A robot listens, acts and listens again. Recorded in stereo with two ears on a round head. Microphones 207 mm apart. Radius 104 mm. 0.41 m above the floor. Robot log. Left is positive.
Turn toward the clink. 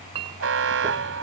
note: The clink: about 25° right or 155° right.
cmd yaw -25
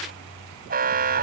cmd idle
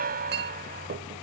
note: So it is at 125° right.
cmd yaw -125
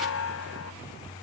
cmd idle
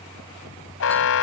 cmd idle
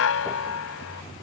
end: Facing where the clink came from. I can't hear it now.